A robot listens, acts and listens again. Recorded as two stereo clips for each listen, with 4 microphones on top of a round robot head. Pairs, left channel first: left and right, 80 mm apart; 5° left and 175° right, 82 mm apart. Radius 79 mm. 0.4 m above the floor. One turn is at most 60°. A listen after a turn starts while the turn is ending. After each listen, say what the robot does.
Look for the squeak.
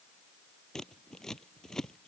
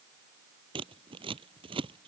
Keep listening.
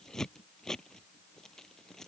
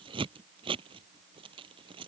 Keep listening.
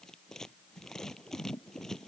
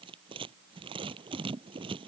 I can't make out a squeak to turn to.